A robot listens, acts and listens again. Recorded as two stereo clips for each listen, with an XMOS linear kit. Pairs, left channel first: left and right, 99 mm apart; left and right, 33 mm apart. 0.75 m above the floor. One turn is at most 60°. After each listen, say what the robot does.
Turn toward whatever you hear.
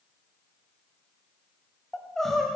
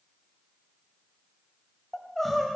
Turn 30° left.
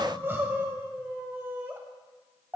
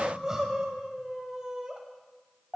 Turn 25° right.
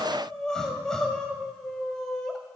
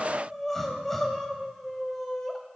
Turn 10° left.
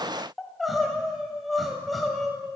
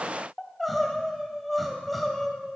Found it: crying, straight ahead, 1 to 2 m away.